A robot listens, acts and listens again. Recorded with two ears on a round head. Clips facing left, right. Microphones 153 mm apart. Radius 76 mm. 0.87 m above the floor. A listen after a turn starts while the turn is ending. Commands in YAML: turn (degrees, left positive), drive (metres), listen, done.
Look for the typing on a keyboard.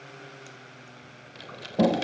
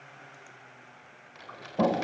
turn: 40
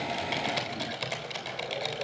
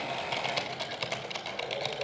done: "Facing the typing on a keyboard, 2 to 4 m away."